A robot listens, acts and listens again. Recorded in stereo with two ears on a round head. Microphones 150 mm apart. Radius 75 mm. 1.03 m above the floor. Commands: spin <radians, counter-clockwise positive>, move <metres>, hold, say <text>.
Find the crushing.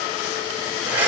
hold
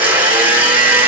hold
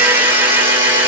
say I can't make out crushing, only a blender.